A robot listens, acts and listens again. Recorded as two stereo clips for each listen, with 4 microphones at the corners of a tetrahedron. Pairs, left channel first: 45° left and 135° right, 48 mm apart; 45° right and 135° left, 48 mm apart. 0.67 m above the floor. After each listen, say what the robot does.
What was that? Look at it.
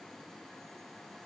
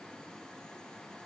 Keep listening.
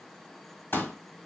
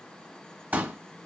Turn 80° left.
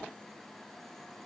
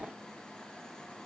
Facing where the pop came from. I can't hear it now.